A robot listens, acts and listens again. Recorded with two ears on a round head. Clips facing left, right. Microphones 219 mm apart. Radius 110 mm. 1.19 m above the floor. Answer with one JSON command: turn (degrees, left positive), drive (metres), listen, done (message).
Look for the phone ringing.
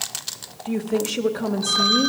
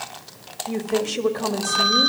{"turn": 50}
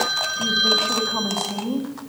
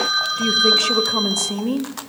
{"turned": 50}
{"done": "Facing the phone ringing, over 4 m away."}